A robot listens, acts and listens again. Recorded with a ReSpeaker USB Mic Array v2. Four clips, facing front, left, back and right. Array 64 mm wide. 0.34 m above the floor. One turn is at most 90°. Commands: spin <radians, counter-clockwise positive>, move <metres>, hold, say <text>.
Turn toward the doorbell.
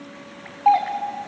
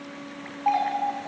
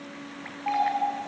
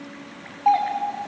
spin -0.35
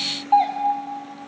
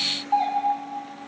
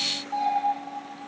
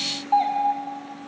say Found it: a doorbell, straight ahead.